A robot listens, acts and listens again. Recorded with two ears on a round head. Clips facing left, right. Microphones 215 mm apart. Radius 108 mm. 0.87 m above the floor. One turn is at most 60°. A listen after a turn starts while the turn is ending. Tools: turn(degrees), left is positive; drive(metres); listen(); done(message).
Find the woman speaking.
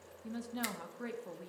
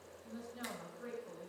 turn(degrees=60)
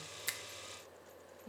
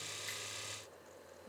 turn(degrees=35)
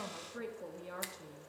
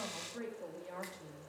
turn(degrees=10)
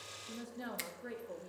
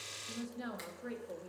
done("Facing the woman speaking.")